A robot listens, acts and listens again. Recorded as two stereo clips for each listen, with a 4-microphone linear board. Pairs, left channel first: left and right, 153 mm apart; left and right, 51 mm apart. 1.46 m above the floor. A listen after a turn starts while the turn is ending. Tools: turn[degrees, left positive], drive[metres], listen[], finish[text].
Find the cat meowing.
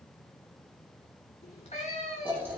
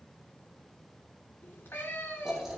Thought: The cat meowing: about 45° left or 135° left.
Action: turn[45]
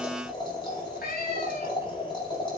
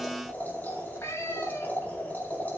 Thought: So it is at 90° left.
Action: turn[90]
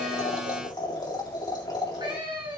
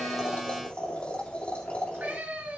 Thought: The cat meowing is now 35° right.
Action: turn[-35]
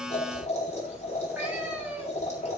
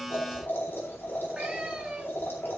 Thought: The cat meowing is now 10° right.
Action: turn[-10]
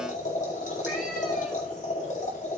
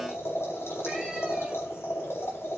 Action: listen[]
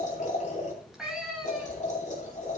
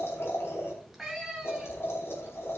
Action: finish[Facing the cat meowing, 2 to 4 m away.]